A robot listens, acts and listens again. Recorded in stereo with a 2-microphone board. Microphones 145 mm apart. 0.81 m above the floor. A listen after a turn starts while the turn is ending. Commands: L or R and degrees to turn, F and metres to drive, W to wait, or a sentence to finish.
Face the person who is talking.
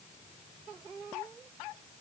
W
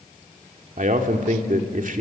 R65
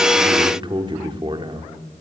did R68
R35
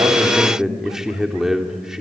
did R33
Found it: a man speaking, straight ahead, 2 to 4 m away.